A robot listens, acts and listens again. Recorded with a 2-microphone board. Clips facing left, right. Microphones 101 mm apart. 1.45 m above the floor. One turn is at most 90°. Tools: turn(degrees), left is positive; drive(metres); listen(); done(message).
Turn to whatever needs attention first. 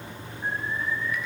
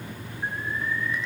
turn(degrees=-90)
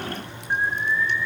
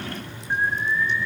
done("Facing the alarm, over 4 m away.")